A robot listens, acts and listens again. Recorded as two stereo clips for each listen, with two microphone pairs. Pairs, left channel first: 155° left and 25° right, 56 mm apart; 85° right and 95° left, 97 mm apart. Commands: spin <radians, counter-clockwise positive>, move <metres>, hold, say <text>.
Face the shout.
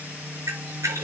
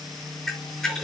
hold
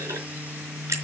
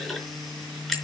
hold
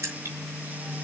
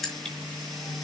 say I can't make out a shout to turn to.